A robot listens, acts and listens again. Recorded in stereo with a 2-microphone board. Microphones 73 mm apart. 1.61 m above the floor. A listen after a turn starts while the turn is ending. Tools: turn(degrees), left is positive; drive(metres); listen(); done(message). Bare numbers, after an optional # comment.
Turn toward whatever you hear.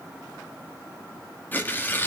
# The tearing paper: about 25° left or 155° left.
turn(25)
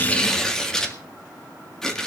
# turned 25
# So it is at 10° left.
turn(10)
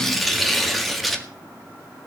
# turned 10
done("Facing the tearing paper, 1 to 2 m away.")